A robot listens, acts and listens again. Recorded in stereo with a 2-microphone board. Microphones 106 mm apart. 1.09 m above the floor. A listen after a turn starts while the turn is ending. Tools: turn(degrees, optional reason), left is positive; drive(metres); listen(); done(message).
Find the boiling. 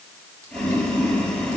turn(degrees=30)
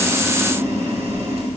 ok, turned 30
turn(degrees=-25, reason="So it is at 25° right.")
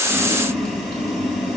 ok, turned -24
done("Facing the boiling.")